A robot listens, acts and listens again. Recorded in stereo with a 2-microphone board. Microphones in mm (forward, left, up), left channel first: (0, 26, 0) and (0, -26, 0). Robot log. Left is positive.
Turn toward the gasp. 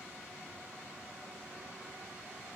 cmd idle
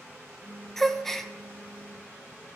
cmd yaw +30
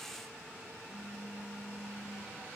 cmd idle
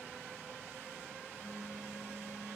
end: I heard a gasp, but can't make it out now. It was about 25° right or 145° left.